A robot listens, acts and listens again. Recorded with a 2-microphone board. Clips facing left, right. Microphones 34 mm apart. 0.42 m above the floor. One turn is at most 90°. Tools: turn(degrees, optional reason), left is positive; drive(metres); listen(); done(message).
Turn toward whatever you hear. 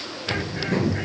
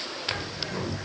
turn(degrees=50, reason="The bird: about 50° left or 130° left.")
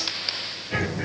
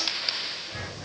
turn(degrees=85, reason="So it is at 85° left.")
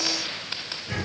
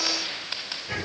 turn(degrees=-10, reason="The bird is now 10° right.")
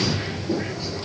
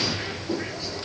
done("Facing the bird, 2 to 4 m away.")